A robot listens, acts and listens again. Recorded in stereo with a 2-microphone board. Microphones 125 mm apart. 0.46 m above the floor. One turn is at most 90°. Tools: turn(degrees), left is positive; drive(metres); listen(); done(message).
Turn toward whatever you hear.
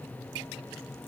listen()
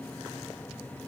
listen()
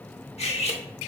turn(degrees=55)
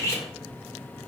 turn(degrees=30)
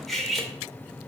done("Found it: cutlery clinking, straight ahead, under 1 m away.")